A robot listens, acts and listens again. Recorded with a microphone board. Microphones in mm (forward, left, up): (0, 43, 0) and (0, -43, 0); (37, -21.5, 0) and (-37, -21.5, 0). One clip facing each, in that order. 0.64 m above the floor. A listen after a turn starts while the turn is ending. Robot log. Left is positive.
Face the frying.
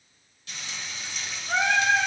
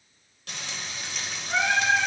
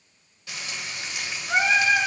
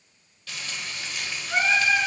note: The frying: 70° right.
cmd yaw -70
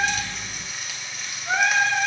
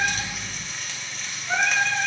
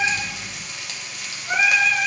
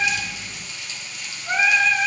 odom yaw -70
end: Found it: frying, straight ahead, 1 to 2 m away.